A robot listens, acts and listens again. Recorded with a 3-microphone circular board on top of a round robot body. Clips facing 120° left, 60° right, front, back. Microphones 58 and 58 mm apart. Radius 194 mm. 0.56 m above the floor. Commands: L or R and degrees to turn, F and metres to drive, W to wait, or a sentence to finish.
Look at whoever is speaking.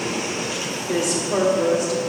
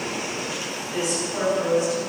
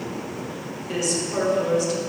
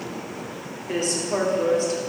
L130
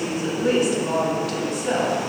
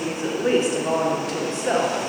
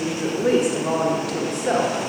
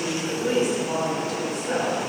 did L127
Facing the woman speaking, 2 to 4 m away.